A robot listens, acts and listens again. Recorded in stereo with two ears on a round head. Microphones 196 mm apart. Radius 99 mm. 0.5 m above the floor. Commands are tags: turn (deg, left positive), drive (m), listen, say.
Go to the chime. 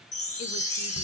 <turn deg="35"/>
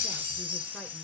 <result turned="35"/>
<turn deg="110"/>
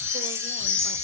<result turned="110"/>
<turn deg="55"/>
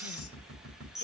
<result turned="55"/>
<drive m="1.0"/>
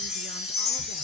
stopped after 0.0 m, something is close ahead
<say>Blocked. The chime is further on, straight ahead.</say>